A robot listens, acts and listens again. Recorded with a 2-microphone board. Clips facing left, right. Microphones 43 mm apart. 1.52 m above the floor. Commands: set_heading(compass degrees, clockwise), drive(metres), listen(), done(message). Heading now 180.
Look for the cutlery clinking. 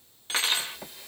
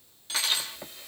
set_heading(140)
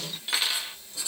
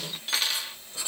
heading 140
done("Found it: cutlery clinking, straight ahead, 1 to 2 m away.")